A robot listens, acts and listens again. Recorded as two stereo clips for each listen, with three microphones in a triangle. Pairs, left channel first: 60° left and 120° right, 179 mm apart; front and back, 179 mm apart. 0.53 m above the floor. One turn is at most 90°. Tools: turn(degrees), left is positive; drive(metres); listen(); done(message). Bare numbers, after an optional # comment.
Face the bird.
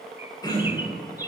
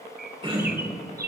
# The bird: 165° left.
turn(90)
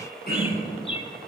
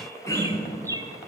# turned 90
# The bird is now 110° left.
turn(90)
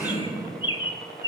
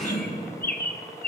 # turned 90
done("Facing the bird, under 1 m away.")